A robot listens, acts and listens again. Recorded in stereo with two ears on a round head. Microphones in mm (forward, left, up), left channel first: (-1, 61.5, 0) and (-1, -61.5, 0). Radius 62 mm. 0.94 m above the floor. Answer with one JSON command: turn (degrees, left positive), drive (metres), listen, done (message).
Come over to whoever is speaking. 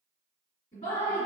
{"turn": 45}
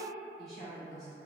{"turn": 90}
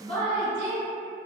{"drive": 1.0}
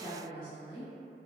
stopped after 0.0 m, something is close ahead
{"done": "Something is in my way. I am facing the woman speaking but have not reached it."}